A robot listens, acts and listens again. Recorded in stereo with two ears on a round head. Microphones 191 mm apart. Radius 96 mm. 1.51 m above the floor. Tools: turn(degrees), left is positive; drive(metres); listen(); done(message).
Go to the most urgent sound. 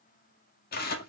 listen()
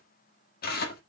listen()
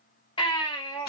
turn(degrees=20)
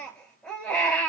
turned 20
drive(metres=1.0)
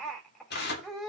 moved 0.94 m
drive(metres=1.0)
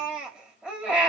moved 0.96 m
drive(metres=1.0)
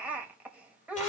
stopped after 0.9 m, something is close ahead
turn(degrees=-10)
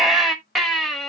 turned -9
done("Arrived at the baby crying, straight ahead.")